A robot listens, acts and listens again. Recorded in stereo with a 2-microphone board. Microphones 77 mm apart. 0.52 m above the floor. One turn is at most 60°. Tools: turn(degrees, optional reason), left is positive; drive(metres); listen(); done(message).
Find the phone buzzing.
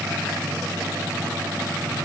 listen()
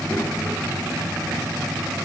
listen()
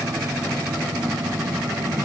done("I can't make out a phone buzzing, only a child speaking.")